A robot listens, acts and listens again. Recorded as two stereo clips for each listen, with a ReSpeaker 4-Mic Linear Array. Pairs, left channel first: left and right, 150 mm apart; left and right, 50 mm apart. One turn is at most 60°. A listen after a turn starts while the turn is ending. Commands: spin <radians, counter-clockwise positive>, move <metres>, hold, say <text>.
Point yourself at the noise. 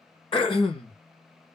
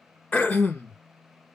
spin 0.61
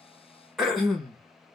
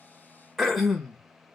say Found it: throat clearing, straight ahead, 1 to 2 m away.